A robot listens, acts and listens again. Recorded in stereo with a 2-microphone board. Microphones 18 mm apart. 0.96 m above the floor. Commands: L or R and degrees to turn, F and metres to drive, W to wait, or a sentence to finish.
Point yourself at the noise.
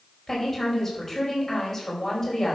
L30
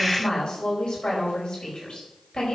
L135
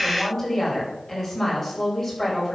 L30
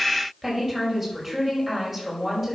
Found it: a woman speaking, straight ahead, over 4 m away.